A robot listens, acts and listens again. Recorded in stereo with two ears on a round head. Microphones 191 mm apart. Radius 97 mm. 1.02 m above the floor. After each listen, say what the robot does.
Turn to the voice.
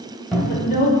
Turn 40° left.
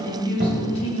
Turn 30° left.
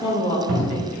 Turn 20° left.
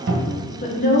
Turn 35° left.
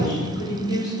Turn 25° left.
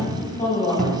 Turn 10° left.
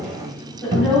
Facing the woman speaking, 2 to 4 m away.